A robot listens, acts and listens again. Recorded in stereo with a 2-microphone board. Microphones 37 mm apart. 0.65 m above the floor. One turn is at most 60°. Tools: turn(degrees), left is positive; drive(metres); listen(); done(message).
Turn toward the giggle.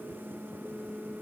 listen()
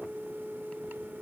listen()
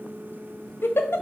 turn(degrees=60)
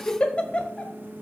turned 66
turn(degrees=30)
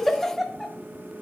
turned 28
done("Facing the giggle.")